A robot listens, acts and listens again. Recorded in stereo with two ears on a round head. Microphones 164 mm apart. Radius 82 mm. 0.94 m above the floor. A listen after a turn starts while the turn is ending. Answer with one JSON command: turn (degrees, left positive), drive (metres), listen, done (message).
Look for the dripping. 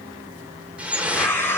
{"turn": -30}
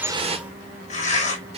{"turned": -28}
{"turn": -145}
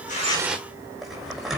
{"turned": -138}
{"done": "Facing the dripping."}